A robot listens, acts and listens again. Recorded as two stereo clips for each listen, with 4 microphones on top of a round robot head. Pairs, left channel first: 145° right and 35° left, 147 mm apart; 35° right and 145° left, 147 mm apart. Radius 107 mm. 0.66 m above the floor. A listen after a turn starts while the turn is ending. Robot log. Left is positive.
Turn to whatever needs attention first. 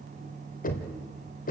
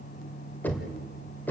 cmd idle
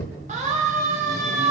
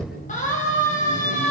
end: Found it: a siren, straight ahead, over 4 m away.